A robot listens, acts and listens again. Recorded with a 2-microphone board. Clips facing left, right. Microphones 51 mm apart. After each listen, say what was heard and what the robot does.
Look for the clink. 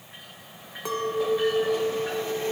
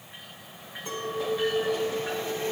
Turn 90° left.
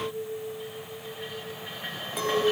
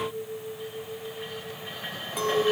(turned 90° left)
Facing the clink.